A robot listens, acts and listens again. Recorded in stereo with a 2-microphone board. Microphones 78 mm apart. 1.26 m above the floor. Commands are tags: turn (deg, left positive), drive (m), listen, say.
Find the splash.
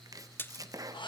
<turn deg="25"/>
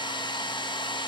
<listen/>
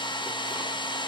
<say>I heard a splash, but can't make it out now. It was about straight ahead or 130° left.</say>